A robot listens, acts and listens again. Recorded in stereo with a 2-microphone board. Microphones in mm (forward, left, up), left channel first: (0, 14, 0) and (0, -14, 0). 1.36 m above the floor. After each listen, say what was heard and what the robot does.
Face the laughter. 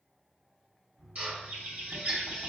The laughter: about 65° right or 115° right. Turn 65° right.
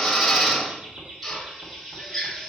So it is at 45° right. Turn 45° right.
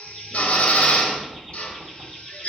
Keep listening.
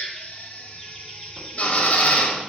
Keep listening.
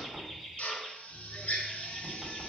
Facing the laughter, over 4 m away.